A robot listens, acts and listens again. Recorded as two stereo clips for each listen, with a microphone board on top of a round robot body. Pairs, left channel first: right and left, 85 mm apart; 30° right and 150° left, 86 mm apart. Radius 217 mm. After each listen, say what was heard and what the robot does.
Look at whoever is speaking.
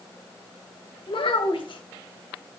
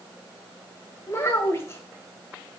The child speaking: 90° right. Turn 90° right.
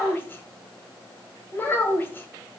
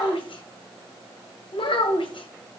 The child speaking is now 25° right. Turn 25° right.
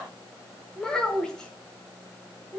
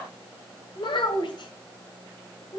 Facing the child speaking, 1 to 2 m away.